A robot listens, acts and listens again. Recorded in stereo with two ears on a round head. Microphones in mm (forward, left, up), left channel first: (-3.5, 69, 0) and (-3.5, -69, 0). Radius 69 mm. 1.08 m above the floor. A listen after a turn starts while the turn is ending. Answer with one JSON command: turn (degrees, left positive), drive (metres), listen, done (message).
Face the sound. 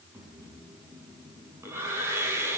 {"turn": -15}
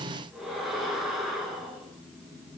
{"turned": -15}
{"done": "Found it: breathing, straight ahead, over 4 m away."}